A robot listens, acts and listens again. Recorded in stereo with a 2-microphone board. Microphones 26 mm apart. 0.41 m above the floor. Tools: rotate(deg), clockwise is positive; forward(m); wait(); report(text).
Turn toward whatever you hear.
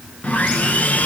rotate(-90)
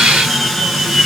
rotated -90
report("Found it: sawing, straight ahead.")